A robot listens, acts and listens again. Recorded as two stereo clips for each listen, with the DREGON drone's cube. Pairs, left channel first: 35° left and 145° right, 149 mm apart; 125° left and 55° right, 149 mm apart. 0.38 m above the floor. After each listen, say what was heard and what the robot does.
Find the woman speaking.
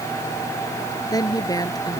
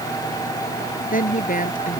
The woman speaking: 100° left. Turn 100° left.
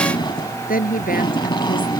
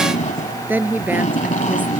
The woman speaking is now 20° left. Turn 20° left.
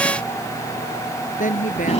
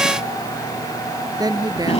The woman speaking is now 10° left. Turn 10° left.
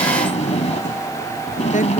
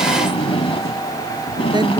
Keep listening.
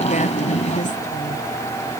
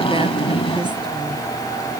Keep listening.
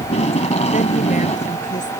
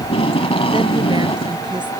Facing where the woman speaking came from. I can't hear it now.